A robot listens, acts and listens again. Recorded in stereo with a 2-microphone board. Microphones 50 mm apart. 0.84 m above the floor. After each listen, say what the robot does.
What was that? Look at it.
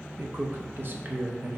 Turn 45° right.
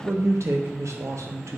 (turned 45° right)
Turn 90° right.
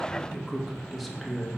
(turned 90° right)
Facing the man speaking, under 1 m away.